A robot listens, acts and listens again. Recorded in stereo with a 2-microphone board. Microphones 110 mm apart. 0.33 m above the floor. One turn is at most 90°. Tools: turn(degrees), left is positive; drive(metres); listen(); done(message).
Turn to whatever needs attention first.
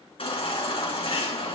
turn(degrees=60)
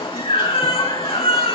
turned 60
turn(degrees=60)
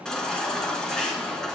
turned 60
done("Facing the baby crying.")